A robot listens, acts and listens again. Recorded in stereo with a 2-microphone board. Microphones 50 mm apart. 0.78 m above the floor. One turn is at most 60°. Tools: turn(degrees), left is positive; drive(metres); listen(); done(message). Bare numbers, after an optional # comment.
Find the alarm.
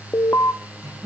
# The alarm: about 65° left or 115° left.
turn(60)
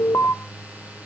# So it is at 50° left.
turn(50)
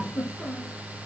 listen()
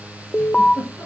# The alarm is now 15° left.
turn(15)
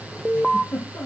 done("Found it: an alarm, straight ahead.")